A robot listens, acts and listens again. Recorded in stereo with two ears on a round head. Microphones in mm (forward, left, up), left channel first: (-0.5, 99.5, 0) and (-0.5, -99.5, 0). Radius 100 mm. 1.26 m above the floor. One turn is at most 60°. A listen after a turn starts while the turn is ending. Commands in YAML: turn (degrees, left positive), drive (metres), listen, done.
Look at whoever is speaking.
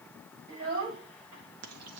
turn: -60
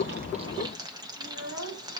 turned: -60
turn: -55
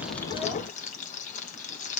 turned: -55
listen: true
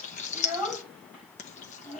done: "Facing the child speaking, over 4 m away."